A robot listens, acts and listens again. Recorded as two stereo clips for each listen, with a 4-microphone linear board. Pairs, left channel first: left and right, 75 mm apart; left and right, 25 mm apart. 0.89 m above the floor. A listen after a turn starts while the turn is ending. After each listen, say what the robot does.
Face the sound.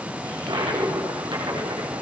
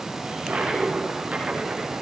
Turn 90° right.
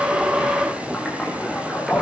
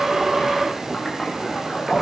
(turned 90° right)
Found it: a toilet flushing, straight ahead, over 4 m away.